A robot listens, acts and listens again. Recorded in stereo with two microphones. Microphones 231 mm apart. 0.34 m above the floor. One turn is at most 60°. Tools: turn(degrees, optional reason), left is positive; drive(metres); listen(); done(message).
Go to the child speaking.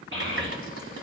turn(degrees=-60, reason="The child speaking: about 60° right or 120° right.")
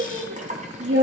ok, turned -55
turn(degrees=-60, reason="So it is at 65° right.")
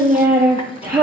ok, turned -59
drive(metres=1.0)
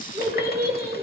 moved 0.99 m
drive(metres=1.0)
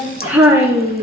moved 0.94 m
drive(metres=1.0)
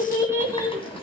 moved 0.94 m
turn(degrees=-15, reason="The child speaking is now 15° right.")
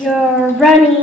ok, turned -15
drive(metres=1.0)
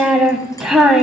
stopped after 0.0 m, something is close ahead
done("Arrived at the child speaking, straight ahead.")